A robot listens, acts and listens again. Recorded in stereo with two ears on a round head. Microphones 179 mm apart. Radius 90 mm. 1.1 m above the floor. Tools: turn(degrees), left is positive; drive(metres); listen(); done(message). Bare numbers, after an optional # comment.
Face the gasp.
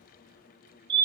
listen()
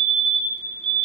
listen()
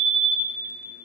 done("I can't make out a gasp to turn to.")